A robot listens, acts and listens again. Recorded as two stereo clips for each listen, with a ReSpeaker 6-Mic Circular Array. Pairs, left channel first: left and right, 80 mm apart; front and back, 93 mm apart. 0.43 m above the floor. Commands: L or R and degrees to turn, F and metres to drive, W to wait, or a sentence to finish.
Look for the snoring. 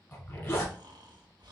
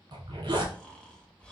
R80
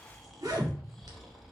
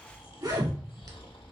Facing the snoring, under 1 m away.